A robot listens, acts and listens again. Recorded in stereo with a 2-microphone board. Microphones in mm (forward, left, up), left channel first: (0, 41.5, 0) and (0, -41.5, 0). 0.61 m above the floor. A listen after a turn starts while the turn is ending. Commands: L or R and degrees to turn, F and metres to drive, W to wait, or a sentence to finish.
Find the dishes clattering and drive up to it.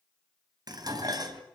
R55
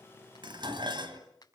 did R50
R75
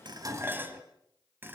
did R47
R25
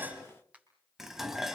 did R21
F1.0
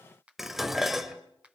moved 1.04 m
F1.0
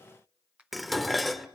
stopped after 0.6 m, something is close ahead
I am next to the dishes clattering.